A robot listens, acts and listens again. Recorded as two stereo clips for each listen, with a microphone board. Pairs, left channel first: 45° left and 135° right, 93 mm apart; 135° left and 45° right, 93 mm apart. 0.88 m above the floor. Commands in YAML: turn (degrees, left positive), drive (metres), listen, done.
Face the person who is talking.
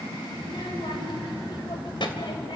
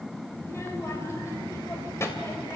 turn: 75
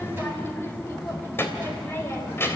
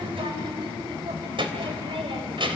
turn: -20
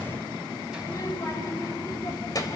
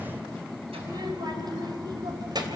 done: "Found it: a child speaking, straight ahead."